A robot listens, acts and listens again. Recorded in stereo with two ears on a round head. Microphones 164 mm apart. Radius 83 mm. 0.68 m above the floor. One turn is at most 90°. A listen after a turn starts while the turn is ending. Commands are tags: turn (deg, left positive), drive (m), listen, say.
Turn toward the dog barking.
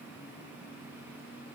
<listen/>
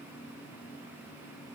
<listen/>
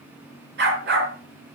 <turn deg="-60"/>
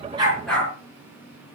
<say>Facing the dog barking.</say>